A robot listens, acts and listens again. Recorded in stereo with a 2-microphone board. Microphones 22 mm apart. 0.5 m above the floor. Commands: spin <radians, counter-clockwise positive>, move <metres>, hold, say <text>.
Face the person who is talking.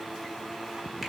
hold
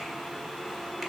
hold
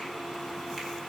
say I can't make out anyone speaking to turn to.